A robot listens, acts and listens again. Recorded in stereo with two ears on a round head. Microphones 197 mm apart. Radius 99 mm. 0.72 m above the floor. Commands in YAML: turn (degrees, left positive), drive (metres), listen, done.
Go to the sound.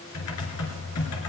turn: 90
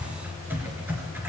turn: -10
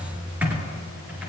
drive: 1.0
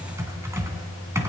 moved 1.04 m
turn: -15
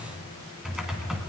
drive: 1.0
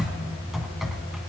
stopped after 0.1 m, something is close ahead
done: "Arrived at the typing on a keyboard, straight ahead."